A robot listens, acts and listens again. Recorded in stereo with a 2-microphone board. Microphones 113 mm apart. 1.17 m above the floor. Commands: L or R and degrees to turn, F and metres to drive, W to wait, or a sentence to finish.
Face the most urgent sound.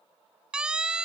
R30
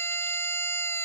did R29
L20
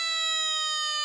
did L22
Found it: a siren, straight ahead.